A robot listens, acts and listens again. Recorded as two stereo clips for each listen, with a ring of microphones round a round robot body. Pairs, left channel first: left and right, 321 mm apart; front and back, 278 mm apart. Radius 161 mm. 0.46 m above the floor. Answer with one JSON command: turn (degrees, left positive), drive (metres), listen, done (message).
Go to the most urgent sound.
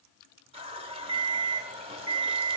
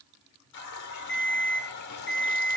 {"turn": -50}
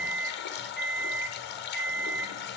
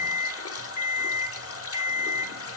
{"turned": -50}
{"drive": 1.0}
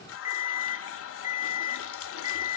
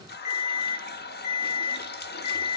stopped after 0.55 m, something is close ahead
{"turn": -10}
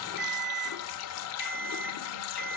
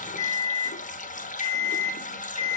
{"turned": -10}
{"done": "Blocked. The alarm is further on, straight ahead."}